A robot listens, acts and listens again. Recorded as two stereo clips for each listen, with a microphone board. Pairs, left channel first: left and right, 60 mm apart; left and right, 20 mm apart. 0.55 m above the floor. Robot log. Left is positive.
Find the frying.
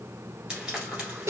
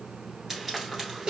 note: The frying: about 20° right or 160° right.
cmd yaw -20
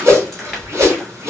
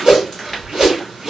cmd idle
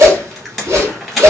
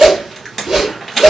end: Found it: frying, straight ahead.